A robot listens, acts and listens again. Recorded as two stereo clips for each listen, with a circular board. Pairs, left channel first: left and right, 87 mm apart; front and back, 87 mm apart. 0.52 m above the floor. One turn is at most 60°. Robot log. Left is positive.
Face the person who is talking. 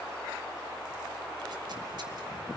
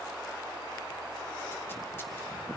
cmd idle
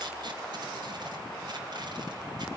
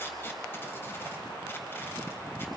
cmd idle
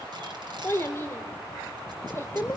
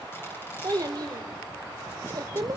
note: The child speaking: 145° left.
cmd yaw +60
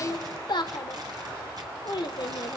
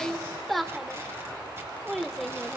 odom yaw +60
note: The child speaking is now 85° left.
cmd yaw +60
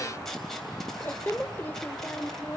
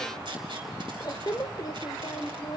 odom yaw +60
note: The child speaking is now 25° left.
cmd yaw +25
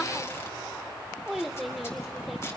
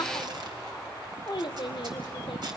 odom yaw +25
end: Found it: a child speaking, straight ahead, under 1 m away.